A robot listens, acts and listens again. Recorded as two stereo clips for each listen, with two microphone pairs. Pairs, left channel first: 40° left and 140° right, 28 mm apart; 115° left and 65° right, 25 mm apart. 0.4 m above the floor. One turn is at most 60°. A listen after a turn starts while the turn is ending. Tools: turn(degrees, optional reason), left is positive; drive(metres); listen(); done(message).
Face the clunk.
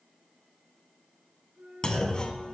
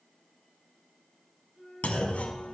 turn(degrees=60, reason="The clunk: 100° left.")
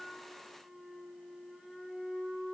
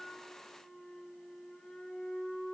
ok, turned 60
turn(degrees=40, reason="Nothing new. It was at 40° left.")
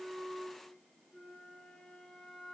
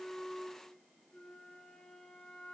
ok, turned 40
done("Facing where the clunk came from. I can't hear it now.")